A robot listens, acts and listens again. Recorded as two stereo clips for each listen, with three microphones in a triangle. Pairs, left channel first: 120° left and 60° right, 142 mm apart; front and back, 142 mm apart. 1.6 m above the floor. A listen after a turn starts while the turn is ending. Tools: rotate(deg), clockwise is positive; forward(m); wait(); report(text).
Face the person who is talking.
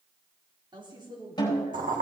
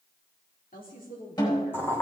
report("Found it: a woman speaking, straight ahead.")